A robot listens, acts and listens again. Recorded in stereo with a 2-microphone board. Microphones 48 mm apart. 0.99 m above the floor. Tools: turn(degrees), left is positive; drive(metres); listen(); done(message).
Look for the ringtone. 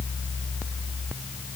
listen()
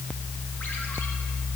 listen()
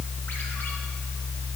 done("I can't make out a ringtone.")